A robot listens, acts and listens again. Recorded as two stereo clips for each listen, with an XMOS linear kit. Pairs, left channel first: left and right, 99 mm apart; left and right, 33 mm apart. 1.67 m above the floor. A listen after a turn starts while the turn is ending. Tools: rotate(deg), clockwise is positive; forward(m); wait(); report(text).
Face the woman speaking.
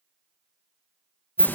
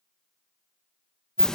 wait()
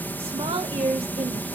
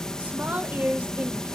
rotate(70)
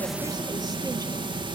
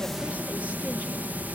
wait()
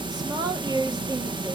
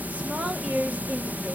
rotate(40)
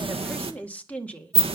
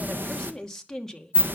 rotate(-15)
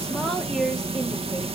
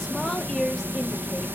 report("Facing the woman speaking, 2 to 4 m away.")